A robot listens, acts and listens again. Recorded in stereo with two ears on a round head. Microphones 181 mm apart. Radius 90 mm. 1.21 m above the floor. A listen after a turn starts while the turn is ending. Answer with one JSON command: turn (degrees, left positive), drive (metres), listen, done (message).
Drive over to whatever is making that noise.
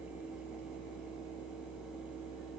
{"listen": true}
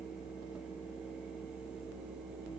{"listen": true}
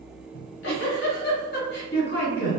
{"turn": 60}
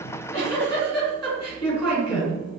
{"turn": 20}
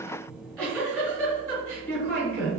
{"drive": 1.0}
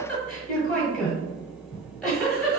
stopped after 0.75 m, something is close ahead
{"done": "Arrived at the giggle, straight ahead."}